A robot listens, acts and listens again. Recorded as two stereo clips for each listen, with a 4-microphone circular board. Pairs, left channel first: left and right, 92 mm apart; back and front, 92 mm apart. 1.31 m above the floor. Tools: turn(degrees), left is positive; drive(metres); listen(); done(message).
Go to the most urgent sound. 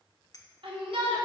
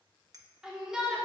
turn(degrees=-85)
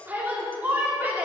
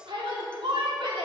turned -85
turn(degrees=-20)
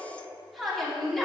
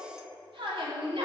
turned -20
drive(metres=1.0)
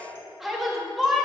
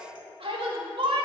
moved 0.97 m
drive(metres=1.0)
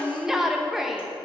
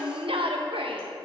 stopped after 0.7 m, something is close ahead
done("Arrived at the shout, straight ahead.")